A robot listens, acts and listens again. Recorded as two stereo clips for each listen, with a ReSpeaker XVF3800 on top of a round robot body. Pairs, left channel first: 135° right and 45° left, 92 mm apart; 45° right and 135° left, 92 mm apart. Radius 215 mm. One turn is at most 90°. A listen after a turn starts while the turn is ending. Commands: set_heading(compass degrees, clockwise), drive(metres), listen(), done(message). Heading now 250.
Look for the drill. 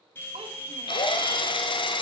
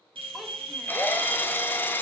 set_heading(340)
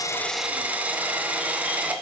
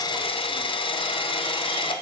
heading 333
set_heading(3)
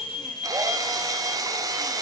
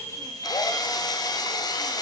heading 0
done("Facing the drill.")